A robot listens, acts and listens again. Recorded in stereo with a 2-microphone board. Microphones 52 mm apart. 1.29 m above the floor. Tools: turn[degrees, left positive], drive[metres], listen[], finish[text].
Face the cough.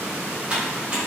Action: listen[]
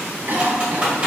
Thought: The cough: about 40° right or 140° right.
Action: turn[-40]
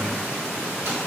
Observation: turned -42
Action: listen[]
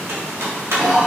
Action: finish[Found it: a cough, straight ahead, 1 to 2 m away.]